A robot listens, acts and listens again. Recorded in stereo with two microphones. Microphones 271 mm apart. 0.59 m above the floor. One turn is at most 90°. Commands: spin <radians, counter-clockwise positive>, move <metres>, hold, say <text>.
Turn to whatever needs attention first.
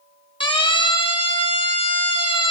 spin 0.26
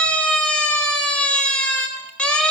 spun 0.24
say Facing the siren.